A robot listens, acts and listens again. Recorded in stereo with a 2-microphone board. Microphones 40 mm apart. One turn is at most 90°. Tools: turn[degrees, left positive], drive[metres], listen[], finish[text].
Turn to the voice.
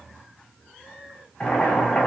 Action: listen[]
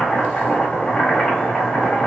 Action: listen[]
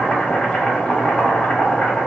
Action: finish[I can't make out anyone speaking to turn to.]